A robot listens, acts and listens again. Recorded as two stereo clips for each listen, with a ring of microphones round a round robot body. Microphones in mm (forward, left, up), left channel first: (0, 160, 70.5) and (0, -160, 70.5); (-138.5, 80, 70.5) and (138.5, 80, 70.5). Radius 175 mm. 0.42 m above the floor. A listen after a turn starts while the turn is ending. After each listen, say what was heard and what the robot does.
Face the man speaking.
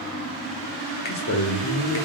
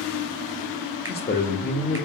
The man speaking: 120° left. Turn 120° left.
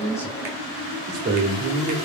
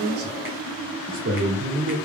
The man speaking is now 45° right. Turn 45° right.
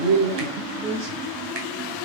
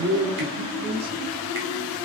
The man speaking is now 20° right. Turn 20° right.
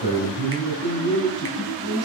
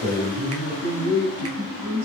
The man speaking is now 10° right. Turn 10° right.
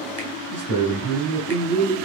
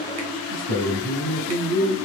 Facing the man speaking, 1 to 2 m away.